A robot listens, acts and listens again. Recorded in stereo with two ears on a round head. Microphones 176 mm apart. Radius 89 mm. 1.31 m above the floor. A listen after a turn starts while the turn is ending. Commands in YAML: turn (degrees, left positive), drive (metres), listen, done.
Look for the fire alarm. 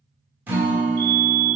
turn: -30
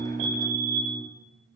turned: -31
turn: -120
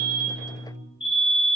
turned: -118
done: "Facing the fire alarm, 2 to 4 m away."